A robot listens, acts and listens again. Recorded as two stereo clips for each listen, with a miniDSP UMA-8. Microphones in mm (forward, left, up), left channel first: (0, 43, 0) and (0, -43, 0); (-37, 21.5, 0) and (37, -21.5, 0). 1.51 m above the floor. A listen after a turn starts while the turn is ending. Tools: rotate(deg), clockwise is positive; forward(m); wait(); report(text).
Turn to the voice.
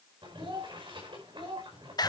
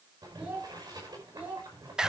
rotate(100)
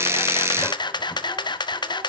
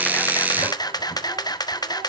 wait()
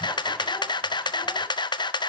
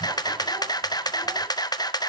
wait()
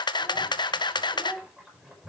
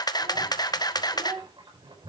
rotate(15)
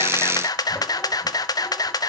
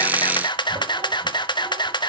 wait()
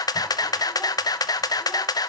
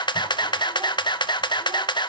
wait()
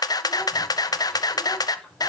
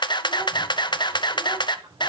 report("I heard a child speaking from this way, but can't make it out now.")